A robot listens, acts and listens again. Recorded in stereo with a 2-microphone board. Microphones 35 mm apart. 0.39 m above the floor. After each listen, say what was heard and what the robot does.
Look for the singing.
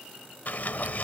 Keep listening.
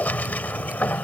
Keep listening.
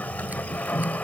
I can't make out singing to turn to.